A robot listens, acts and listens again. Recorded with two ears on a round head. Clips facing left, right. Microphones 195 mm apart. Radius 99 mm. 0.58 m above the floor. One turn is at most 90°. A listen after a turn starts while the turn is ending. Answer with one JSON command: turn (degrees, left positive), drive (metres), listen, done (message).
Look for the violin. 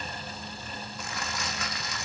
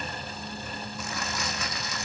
{"listen": true}
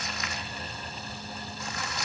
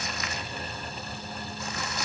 {"listen": true}
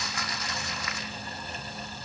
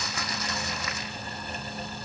{"done": "I can't make out a violin, only crumpling."}